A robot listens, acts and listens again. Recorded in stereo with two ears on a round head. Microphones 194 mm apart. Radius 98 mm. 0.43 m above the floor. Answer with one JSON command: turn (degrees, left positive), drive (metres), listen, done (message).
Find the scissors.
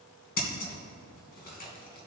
{"turn": 45}
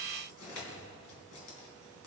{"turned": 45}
{"listen": true}
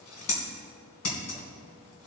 {"turn": 85}
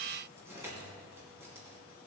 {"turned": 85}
{"listen": true}
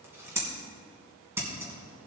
{"turn": -10}
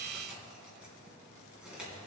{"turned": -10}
{"listen": true}
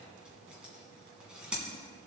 {"done": "Found it: scissors, straight ahead."}